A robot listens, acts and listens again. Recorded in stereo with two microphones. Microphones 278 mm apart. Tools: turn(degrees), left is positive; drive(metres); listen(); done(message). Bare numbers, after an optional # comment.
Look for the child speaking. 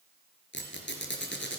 listen()
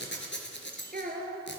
# The child speaking: about 30° right or 150° right.
turn(-30)
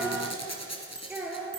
done("Facing the child speaking.")